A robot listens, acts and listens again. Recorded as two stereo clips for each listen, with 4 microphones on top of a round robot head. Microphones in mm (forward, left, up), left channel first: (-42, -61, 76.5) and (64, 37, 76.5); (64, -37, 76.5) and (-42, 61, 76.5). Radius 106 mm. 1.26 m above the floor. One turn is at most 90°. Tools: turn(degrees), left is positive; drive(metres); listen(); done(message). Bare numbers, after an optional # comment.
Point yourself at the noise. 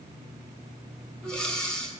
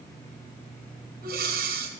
# The breathing: 140° left.
turn(90)
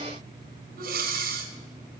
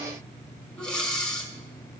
# The breathing is now 40° left.
turn(40)
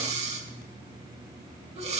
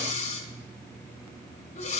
done("Found it: breathing, straight ahead, 1 to 2 m away.")